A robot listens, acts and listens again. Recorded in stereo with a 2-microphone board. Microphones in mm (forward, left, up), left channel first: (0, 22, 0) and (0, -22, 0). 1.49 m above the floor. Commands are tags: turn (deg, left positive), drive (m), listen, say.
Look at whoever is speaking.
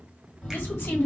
<turn deg="60"/>
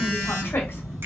<listen/>
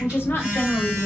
<turn deg="60"/>
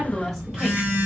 <say>Facing the woman speaking, 1 to 2 m away.</say>